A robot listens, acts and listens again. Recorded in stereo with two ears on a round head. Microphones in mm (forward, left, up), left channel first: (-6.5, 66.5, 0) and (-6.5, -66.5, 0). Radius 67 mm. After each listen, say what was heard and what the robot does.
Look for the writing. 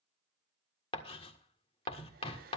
The writing: about 35° left or 145° left. Turn 35° left.
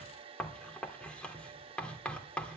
So it is at 10° left. Turn 10° left.
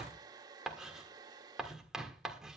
Found it: writing, straight ahead.